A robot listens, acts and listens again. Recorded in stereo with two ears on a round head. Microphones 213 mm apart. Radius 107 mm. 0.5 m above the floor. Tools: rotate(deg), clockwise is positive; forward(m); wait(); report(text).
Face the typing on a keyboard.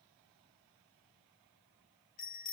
wait()
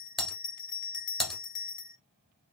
rotate(-30)
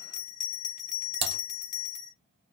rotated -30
rotate(25)
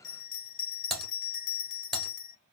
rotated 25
report("Found it: typing on a keyboard, straight ahead.")